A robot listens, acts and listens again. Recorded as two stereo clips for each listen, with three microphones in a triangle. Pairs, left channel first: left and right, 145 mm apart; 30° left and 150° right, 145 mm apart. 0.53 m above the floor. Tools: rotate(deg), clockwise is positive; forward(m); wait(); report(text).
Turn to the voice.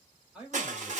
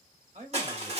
rotate(175)
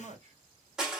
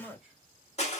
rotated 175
rotate(65)
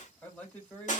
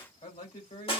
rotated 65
rotate(-15)
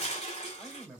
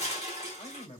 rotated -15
report("Found it: a man speaking, straight ahead, 2 to 4 m away.")